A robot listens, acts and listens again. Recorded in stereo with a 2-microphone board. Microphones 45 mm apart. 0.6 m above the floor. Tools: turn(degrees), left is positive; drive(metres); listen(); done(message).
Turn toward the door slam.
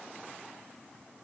listen()
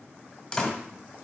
turn(degrees=30)
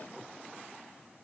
listen()
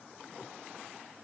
done("I heard a door slam, but can't make it out now. It was about 15° right or 135° left.")